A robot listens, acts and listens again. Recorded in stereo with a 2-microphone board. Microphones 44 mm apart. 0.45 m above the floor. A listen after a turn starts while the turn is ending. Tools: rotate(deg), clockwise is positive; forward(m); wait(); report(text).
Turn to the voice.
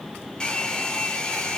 wait()
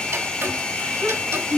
rotate(30)
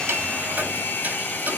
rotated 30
wait()
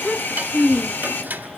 rotate(-15)
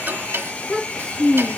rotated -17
report("Facing the child speaking.")